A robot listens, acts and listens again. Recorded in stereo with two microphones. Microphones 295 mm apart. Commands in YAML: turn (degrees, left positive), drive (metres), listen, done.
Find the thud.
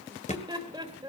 turn: 25
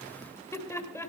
listen: true
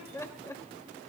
done: "I heard a thud, but can't make it out now. It was about straight ahead or 130° left."